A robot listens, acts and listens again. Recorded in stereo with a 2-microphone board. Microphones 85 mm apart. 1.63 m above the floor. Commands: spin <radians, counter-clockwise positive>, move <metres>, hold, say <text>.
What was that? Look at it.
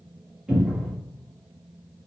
spin -0.52
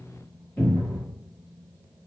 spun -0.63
spin 0.52
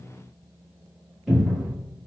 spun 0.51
say Facing the cupboard door.